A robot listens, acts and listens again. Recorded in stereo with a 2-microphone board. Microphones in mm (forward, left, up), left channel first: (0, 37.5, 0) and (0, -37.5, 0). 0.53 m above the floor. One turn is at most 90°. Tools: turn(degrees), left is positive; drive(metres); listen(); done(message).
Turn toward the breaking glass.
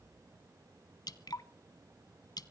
listen()
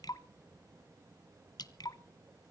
listen()
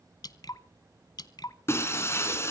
turn(degrees=35)
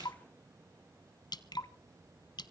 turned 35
listen()
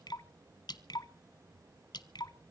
done("I heard breaking glass, but can't make it out now. It was about straight ahead or 110° left.")